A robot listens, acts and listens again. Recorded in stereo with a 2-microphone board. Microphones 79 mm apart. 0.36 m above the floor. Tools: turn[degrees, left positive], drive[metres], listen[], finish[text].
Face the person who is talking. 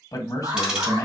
Thought: The man speaking: about 45° left or 135° left.
Action: turn[45]
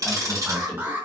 Action: listen[]
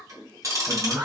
Action: listen[]
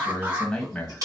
Thought: So it is at 10° left.
Action: turn[10]
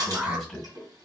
Action: finish[Found it: a man speaking, straight ahead.]